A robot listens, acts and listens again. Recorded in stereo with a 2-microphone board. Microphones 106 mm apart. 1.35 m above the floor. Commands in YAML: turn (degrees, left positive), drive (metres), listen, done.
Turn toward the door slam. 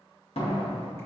turn: 75
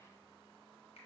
listen: true
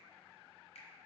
done: "I heard a door slam, but can't make it out now. It was about straight ahead or 30° left."